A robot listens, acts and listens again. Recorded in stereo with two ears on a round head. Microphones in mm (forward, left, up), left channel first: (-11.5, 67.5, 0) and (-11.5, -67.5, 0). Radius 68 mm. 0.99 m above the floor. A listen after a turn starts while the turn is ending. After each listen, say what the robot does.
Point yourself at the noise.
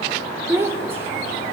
Turn 15° right.
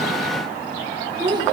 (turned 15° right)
Turn 30° right.
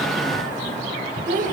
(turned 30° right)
Turn 120° right.
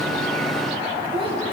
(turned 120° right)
Keep listening.
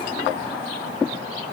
Keep listening.
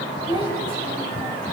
Turn 35° right.
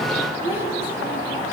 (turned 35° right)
Turn 15° right.
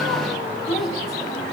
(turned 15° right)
Keep listening.
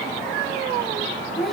Facing the child speaking, over 4 m away.